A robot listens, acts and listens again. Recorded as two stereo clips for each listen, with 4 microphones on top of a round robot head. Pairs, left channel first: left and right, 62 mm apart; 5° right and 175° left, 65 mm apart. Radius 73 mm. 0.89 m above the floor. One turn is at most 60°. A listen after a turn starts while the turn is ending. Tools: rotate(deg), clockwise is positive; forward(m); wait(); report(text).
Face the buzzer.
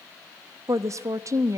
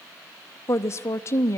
wait()
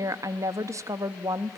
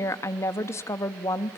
wait()
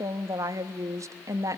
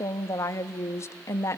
report("I can't make out a buzzer, only a woman speaking.")